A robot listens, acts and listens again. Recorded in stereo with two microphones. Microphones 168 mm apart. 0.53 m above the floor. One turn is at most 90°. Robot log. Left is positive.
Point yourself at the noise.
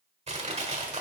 note: The crushing: about 40° right or 140° right.
cmd yaw -40
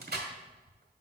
note: So it is at 100° right.
cmd yaw -90
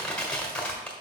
end: Facing the crushing, 1 to 2 m away.